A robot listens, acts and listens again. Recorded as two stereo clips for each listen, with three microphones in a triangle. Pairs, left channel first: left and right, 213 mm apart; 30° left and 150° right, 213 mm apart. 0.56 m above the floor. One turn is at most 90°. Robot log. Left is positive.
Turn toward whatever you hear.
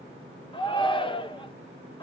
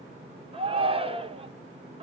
note: The shout: 155° left.
cmd yaw +90
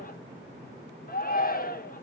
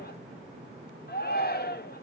note: The shout is now 55° left.
cmd yaw +55
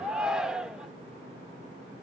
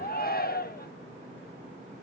end: Facing the shout, 1 to 2 m away.